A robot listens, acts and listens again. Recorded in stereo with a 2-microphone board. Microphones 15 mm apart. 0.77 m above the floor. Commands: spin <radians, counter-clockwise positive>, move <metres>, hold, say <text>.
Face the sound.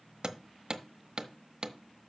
spin -0.79
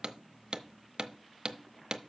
spin -1.31
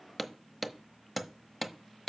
say Facing the hammering, under 1 m away.